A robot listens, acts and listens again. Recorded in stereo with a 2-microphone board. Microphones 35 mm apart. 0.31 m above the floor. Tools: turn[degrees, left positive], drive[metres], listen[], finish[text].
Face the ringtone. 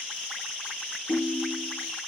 Thought: The ringtone: about 20° left or 160° left.
Action: turn[20]
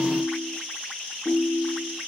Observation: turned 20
Action: finish[Facing the ringtone, over 4 m away.]